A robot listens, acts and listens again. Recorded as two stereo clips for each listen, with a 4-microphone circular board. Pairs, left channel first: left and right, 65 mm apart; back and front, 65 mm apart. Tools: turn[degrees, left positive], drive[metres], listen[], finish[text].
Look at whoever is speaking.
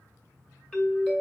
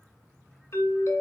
Action: listen[]
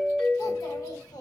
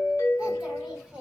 Thought: The child speaking: 75° left.
Action: turn[75]
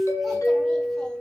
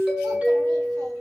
Action: listen[]
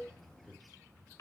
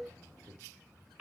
Thought: The child speaking is now 15° left.
Action: turn[15]
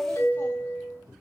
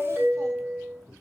Thought: The child speaking is now 30° left.
Action: turn[30]
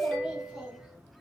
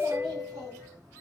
Action: listen[]
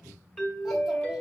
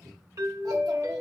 Thought: The child speaking is now 10° right.
Action: turn[-10]
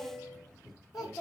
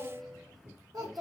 Action: finish[Facing the child speaking.]